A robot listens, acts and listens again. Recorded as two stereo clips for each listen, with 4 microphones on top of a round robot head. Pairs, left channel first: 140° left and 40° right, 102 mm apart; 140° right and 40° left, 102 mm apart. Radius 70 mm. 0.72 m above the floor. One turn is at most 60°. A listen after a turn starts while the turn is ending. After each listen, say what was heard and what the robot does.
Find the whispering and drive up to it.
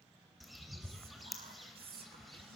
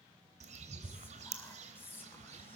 The whispering: 70° right. Turn 60° right.
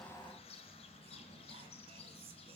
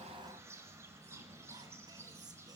Nothing new. It was at 10° right. Turn 10° right.
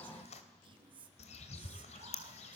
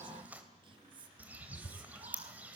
Drive 1.0 m forward.
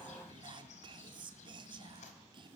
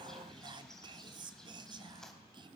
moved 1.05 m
Drive 1.0 m forward.
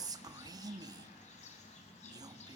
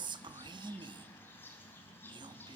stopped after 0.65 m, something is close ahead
Arrived at the whispering, straight ahead.